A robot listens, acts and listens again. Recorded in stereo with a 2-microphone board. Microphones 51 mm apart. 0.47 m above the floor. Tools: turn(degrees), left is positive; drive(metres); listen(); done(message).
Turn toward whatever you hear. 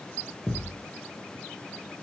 turn(degrees=-40)
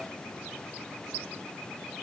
listen()
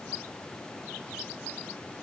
done("I heard a thud, but can't make it out now. It was about straight ahead or 100° right.")